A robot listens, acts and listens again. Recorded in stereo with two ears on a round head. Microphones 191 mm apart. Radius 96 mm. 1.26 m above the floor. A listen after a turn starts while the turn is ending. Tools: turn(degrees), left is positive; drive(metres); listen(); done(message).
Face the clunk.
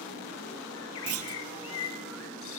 turn(degrees=-75)
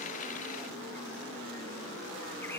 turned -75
listen()
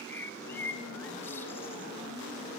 done("I heard a clunk, but can't make it out now. It was about straight ahead or 30° right.")